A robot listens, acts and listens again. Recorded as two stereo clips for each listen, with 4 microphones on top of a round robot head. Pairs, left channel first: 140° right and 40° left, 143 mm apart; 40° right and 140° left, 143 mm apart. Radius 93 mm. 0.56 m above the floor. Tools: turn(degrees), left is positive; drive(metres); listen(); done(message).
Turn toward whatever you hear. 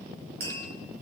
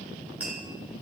turn(degrees=60)
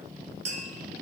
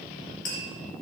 done("Found it: tapping, straight ahead, 2 to 4 m away.")